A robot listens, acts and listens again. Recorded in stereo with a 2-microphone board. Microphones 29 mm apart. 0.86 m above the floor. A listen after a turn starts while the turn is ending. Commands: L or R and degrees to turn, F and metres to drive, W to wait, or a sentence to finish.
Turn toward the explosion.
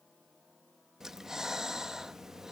W
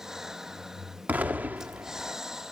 R70
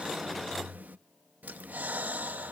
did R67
W
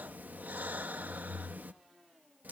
I heard an explosion, but can't make it out now. It was about straight ahead or 45° right.